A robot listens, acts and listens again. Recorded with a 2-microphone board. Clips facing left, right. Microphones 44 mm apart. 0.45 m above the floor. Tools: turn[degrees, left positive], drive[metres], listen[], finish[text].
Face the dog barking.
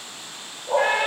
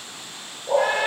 Thought: The dog barking: about 25° right or 155° right.
Action: turn[-25]
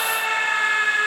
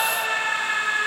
Action: listen[]
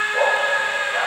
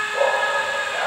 Action: finish[Found it: a dog barking, straight ahead.]